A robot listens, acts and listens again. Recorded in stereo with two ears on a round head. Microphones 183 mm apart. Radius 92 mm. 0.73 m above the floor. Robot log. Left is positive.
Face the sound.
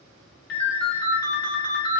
note: The ringtone: about 55° left or 125° left.
cmd yaw +55
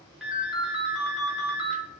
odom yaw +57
end: Found it: a ringtone, straight ahead, under 1 m away.